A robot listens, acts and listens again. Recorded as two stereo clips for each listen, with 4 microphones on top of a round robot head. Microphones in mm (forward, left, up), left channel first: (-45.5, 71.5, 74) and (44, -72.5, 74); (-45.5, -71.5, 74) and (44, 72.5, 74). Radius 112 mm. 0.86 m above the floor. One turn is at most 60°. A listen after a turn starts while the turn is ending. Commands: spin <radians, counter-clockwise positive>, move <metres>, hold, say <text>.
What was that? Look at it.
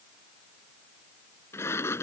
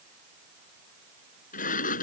spin -1.05
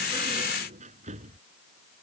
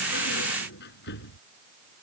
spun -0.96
spin -1.05
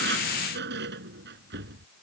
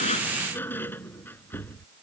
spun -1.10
spin -0.79
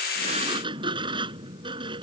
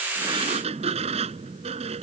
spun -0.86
say Facing the sliding door.